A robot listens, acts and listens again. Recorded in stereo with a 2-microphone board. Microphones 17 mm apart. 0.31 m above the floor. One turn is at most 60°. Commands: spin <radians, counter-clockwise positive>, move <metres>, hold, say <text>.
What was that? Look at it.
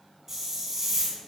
spin -0.44
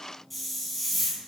say Found it: a hiss, straight ahead.